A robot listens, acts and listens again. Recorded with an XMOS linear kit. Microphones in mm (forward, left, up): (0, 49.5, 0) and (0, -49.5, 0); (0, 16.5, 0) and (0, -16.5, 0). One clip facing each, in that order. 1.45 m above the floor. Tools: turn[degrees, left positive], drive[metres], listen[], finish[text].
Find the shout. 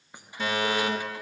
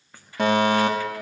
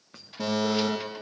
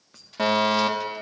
Action: listen[]
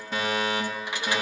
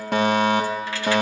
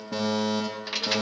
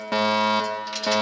Action: listen[]
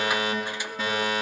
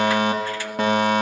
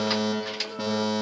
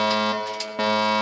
Action: finish[I can't make out a shout to turn to.]